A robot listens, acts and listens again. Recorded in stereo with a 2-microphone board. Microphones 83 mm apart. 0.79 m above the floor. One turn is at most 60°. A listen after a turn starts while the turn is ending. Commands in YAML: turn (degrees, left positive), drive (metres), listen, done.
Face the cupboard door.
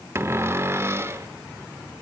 turn: -30
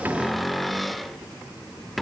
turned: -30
done: "Facing the cupboard door, 1 to 2 m away."